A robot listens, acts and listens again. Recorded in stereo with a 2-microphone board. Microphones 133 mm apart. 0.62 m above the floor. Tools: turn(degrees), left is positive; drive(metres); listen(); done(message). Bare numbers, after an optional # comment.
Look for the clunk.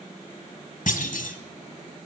turn(90)
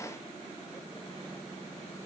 done("I heard a clunk from this way, but can't make it out now.")